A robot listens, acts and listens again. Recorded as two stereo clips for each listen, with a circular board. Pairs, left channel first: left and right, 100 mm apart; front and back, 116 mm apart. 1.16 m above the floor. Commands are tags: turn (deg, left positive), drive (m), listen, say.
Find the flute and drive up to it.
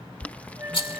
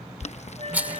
<turn deg="-155"/>
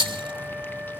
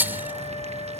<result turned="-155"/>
<turn deg="-10"/>
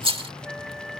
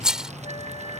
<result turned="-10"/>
<drive m="1.0"/>
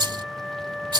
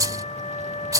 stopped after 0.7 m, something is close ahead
<say>Blocked. The flute is further on, straight ahead.</say>